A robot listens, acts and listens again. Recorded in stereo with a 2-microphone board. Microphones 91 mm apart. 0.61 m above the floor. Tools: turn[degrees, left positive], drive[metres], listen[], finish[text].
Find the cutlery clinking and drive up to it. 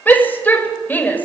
Action: listen[]
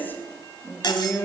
Thought: The cutlery clinking: about 55° left or 125° left.
Action: turn[55]
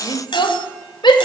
Thought: So it is at 70° left.
Action: turn[70]
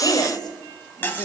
Thought: The cutlery clinking is now 25° left.
Action: turn[25]
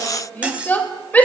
Thought: The cutlery clinking is now 15° right.
Action: turn[-15]
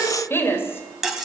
Action: drive[1.0]
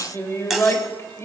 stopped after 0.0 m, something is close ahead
Action: finish[Something is in my way. I am facing the cutlery clinking but have not reached it.]